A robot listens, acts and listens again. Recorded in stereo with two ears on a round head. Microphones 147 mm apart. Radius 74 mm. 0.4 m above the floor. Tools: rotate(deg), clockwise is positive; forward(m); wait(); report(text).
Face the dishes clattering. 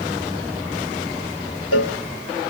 wait()
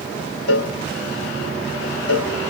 wait()
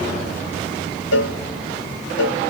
report("I can't make out dishes clattering to turn to.")